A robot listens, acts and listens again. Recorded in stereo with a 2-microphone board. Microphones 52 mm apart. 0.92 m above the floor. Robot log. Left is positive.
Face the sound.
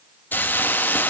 note: The hiss: about 35° left or 145° left.
cmd yaw +35
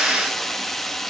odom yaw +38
end: Facing the hiss, 1 to 2 m away.